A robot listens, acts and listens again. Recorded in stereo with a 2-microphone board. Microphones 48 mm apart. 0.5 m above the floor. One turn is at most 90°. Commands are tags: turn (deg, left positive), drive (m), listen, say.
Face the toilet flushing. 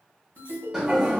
<turn deg="-15"/>
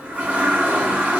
<turn deg="-90"/>
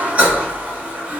<turn deg="-35"/>
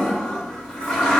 <turn deg="15"/>
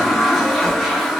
<say>Found it: a toilet flushing, straight ahead, 1 to 2 m away.</say>